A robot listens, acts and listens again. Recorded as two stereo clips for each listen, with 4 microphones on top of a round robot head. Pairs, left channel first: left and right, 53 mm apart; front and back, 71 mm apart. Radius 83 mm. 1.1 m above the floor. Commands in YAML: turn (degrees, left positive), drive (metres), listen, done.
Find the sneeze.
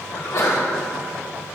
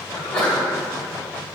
turn: 75
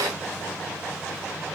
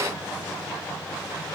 done: "I heard a sneeze from this way, but can't make it out now."